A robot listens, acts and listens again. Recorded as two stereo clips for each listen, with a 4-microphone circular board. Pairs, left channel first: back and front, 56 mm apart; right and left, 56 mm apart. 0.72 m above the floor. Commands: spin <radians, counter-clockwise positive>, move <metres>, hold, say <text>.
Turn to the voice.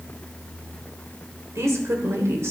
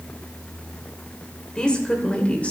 spin -0.44
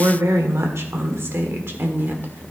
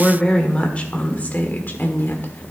spin -0.79
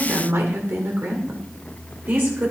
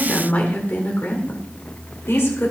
spin -0.87
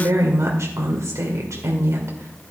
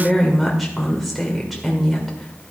say Found it: a woman speaking, straight ahead.